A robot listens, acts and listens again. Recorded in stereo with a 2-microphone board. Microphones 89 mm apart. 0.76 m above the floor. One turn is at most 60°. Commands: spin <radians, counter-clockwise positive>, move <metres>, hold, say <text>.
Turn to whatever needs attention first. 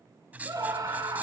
spin -0.70
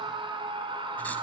spin -1.05
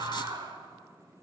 spin -0.87
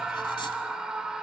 spin -0.17
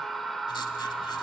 say Found it: a scream, straight ahead, 2 to 4 m away.